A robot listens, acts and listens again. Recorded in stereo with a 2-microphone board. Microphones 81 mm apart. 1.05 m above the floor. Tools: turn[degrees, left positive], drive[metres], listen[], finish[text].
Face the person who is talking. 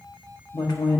Thought: The woman speaking: about 60° left or 120° left.
Action: turn[60]
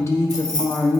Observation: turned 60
Thought: So it is at 40° left.
Action: turn[40]
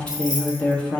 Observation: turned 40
Thought: The woman speaking is now 15° left.
Action: turn[15]
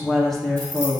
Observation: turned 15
Action: finish[Found it: a woman speaking, straight ahead, 1 to 2 m away.]